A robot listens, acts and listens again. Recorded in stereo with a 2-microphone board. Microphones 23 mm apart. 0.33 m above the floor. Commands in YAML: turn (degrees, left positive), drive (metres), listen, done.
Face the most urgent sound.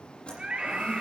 turn: -50
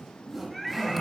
done: "Facing the scream."